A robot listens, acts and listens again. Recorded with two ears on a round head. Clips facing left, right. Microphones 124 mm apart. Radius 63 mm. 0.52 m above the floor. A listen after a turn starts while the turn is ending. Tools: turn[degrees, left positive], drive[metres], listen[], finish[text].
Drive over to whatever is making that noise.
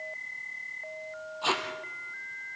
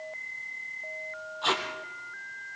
Action: turn[30]
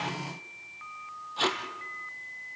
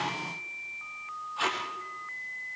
Thought: So it is at 140° left.
Action: turn[140]
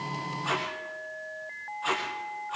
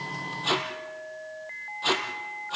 Thought: The tape being pulled is now 35° right.
Action: turn[-35]
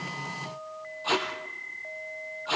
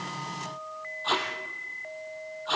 Thought: The tape being pulled is now 10° left.
Action: turn[10]
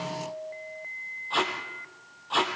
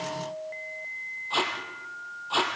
Action: drive[1.0]
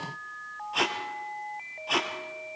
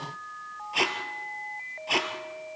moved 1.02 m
Action: drive[1.0]
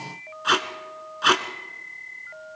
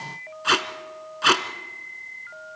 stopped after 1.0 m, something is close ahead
Action: finish[I am next to the tape being pulled.]